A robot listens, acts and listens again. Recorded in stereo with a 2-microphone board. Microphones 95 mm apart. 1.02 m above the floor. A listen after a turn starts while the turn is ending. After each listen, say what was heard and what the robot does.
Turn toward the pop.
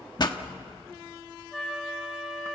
The pop: about 45° left or 135° left. Turn 45° left.
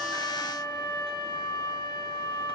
Keep listening.
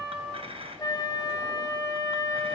I heard a pop, but can't make it out now. It was about straight ahead or 90° left.